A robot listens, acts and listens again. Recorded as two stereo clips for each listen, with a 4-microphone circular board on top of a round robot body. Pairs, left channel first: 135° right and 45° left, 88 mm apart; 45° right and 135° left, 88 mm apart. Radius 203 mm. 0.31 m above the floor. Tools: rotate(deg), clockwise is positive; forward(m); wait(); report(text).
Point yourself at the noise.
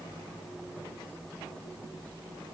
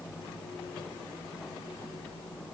wait()
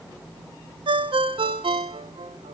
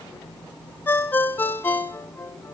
rotate(-25)
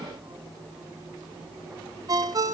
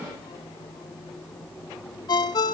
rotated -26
report("Facing the ringtone.")